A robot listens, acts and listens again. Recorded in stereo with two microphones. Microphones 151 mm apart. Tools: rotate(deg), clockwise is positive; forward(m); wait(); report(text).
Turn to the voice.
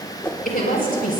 rotate(-65)
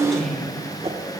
report("Facing the woman speaking, over 4 m away.")